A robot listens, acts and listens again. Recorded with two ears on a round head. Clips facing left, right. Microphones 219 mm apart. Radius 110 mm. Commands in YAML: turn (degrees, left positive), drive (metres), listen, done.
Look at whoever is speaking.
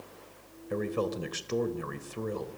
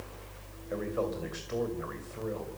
turn: 45
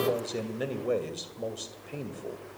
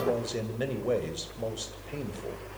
done: "Facing the man speaking."